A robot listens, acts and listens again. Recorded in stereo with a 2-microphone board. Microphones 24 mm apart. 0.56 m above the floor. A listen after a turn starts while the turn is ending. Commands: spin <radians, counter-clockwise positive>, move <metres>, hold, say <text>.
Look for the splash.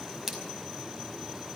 spin -0.52
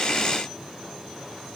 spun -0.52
hold
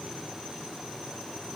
say I heard a splash, but can't make it out now. It was about 20° left or 140° right.